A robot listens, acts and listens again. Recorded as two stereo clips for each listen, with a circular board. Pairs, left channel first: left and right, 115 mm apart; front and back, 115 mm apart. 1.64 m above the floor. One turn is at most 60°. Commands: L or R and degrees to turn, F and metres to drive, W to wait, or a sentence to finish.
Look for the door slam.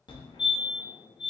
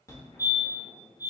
W
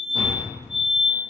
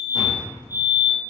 R45
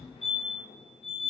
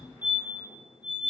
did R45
Facing where the door slam came from. I can't hear it now.